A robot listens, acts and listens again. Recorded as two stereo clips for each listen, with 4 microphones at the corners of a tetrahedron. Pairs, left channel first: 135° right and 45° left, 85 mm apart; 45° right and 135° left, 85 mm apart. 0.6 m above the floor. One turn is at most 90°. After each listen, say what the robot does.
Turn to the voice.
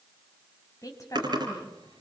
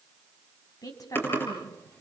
Turn 90° right.
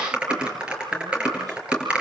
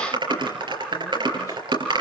Keep listening.
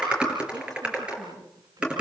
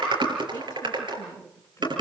Turn 10° left.
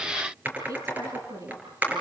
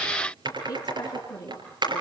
Found it: a woman speaking, straight ahead.